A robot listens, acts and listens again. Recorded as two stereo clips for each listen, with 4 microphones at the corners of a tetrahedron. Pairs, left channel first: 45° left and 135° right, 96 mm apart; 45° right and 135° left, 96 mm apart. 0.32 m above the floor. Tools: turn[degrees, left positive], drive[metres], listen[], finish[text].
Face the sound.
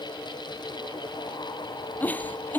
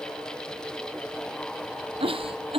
Thought: The giggle: 120° left.
Action: turn[120]
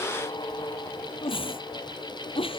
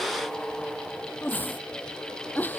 Thought: The giggle is now 25° left.
Action: turn[25]
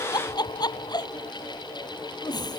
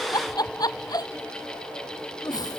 Action: finish[Facing the giggle.]